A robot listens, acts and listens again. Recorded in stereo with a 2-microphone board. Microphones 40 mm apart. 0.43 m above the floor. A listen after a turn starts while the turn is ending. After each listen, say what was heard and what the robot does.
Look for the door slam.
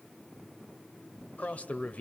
Keep listening.
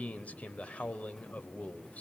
Keep listening.
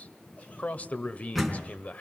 Turn 30° left.
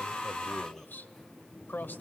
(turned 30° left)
Keep listening.
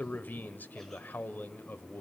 I heard a door slam, but can't make it out now. It was about 25° right or 145° left.